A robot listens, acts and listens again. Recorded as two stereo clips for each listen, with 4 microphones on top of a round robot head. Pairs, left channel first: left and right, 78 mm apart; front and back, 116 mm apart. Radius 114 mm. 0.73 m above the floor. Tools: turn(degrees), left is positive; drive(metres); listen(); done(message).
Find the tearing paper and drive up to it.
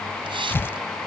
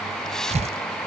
turn(degrees=150)
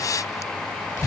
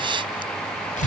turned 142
turn(degrees=10)
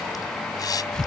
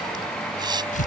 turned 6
drive(metres=1.0)
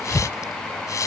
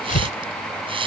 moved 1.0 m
turn(degrees=10)
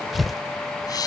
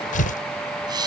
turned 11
drive(metres=1.0)
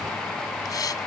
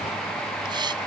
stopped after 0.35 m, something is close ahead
listen()
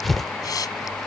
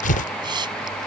done("Arrived at the tearing paper, straight ahead.")